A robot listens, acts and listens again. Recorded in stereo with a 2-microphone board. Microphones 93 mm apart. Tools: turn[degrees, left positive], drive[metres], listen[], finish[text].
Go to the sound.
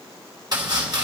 Thought: The chopping: about 50° right or 130° right.
Action: turn[-50]
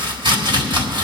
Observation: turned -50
Thought: So it is at 75° right.
Action: turn[-75]
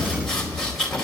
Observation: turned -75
Action: drive[1.0]
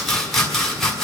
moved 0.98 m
Action: drive[1.0]
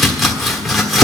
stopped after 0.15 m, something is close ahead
Action: finish[I am next to the chopping.]